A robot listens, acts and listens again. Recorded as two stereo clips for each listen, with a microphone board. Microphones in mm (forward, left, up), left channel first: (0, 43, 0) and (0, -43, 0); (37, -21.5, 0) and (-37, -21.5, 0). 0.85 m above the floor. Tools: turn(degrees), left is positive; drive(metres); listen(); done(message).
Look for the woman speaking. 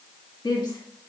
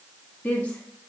turn(degrees=70)
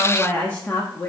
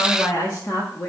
turn(degrees=35)
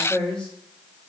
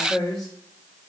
turn(degrees=10)
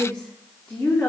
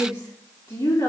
turn(degrees=20)
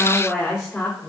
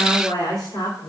turn(degrees=10)
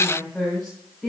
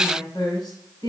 done("Found it: a woman speaking, straight ahead.")